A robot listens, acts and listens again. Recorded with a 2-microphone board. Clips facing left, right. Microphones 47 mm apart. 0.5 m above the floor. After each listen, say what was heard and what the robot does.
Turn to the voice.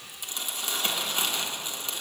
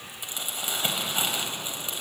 Keep listening.
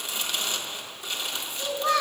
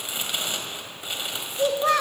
The child speaking: about 50° right or 130° right. Turn 50° right.
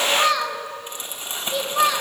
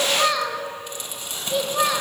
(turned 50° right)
So it is at 10° right. Turn 10° right.
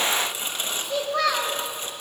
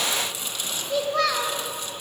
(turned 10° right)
Found it: a child speaking, straight ahead, 2 to 4 m away.